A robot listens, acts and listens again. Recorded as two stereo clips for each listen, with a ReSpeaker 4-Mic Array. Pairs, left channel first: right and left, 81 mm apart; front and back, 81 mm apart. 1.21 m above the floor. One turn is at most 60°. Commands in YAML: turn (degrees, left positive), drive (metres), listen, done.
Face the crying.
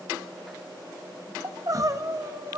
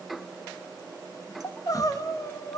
turn: 45
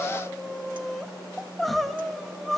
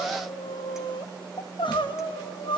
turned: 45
done: "Facing the crying, 1 to 2 m away."